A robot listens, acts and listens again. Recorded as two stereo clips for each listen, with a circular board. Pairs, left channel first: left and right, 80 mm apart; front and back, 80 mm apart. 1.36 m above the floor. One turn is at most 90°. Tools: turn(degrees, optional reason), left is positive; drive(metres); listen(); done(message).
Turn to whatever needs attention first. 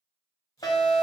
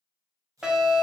turn(degrees=90, reason="The fire alarm: 100° left.")
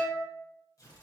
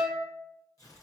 turn(degrees=10, reason="The fire alarm is now 10° left.")
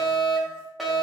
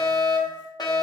done("Facing the fire alarm.")